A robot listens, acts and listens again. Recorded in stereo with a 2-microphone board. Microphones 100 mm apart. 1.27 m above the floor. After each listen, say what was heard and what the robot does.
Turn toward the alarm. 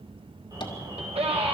The alarm: about 35° right or 145° right. Turn 35° right.
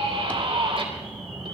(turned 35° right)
Found it: an alarm, straight ahead, over 4 m away.